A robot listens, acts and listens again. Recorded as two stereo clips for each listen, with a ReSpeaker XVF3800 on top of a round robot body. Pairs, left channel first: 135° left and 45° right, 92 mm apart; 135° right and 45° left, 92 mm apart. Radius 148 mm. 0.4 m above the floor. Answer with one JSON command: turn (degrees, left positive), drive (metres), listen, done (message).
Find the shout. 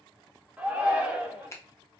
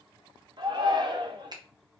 {"turn": 30}
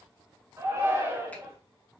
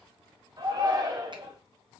{"turn": 10}
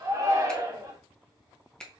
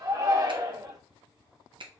{"done": "Found it: a shout, straight ahead, 1 to 2 m away."}